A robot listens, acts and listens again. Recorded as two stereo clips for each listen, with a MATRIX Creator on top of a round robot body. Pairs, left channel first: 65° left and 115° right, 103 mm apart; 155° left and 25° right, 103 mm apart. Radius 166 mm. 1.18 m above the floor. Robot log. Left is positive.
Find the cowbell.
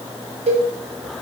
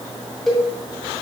note: The cowbell: 115° right.
cmd yaw -115
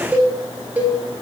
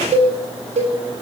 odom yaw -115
note: The cowbell is now 35° right.
cmd yaw -35
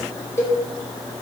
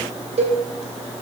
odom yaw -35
end: Found it: a cowbell, straight ahead, 1 to 2 m away.